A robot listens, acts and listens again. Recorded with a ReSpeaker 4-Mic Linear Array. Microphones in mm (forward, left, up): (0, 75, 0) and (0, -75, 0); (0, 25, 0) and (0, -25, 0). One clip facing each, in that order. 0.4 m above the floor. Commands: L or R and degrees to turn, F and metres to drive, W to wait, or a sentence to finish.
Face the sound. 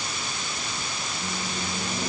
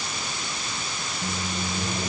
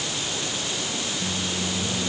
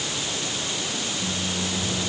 L20
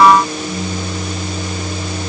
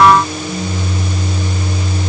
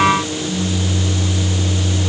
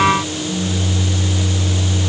L140
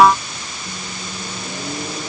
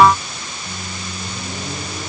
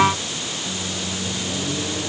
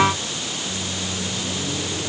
L15
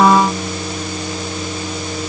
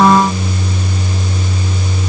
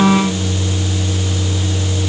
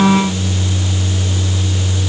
Found it: a microwave, straight ahead.